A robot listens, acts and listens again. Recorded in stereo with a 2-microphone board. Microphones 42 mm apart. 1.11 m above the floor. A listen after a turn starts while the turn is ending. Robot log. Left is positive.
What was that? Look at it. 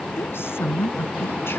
note: The woman speaking: about 70° left or 110° left.
cmd yaw +70
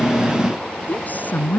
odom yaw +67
note: So it is at 45° left.
cmd yaw +45
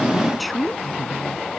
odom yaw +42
end: Facing the woman speaking.